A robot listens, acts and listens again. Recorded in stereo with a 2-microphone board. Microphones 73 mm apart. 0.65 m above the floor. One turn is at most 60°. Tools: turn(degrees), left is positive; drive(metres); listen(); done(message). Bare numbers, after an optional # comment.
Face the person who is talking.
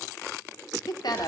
# The woman speaking: about 65° left or 115° left.
turn(60)
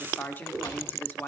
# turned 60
# So it is at 30° left.
turn(30)
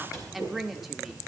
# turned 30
done("Facing the woman speaking.")